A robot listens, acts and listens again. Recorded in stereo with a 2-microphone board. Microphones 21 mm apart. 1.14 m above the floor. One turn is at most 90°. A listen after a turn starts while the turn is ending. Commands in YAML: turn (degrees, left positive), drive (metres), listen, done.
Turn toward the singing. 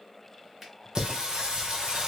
turn: -40
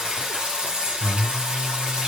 turn: -90
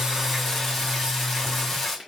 turn: 15
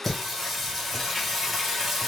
done: "Facing the singing, 1 to 2 m away."